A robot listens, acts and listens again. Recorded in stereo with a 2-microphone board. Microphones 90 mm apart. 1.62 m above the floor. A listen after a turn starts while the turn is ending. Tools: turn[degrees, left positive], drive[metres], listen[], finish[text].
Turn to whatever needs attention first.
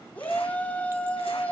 Thought: The shout: about 15° left or 165° left.
Action: turn[15]
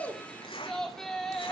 Action: finish[Facing the shout.]